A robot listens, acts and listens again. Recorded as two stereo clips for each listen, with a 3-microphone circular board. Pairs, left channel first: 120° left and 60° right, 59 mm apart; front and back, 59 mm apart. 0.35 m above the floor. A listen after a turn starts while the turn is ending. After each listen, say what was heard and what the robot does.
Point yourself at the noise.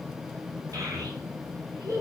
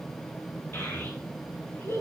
The child speaking: 40° right. Turn 40° right.
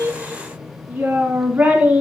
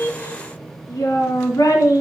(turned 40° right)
Facing the child speaking, 2 to 4 m away.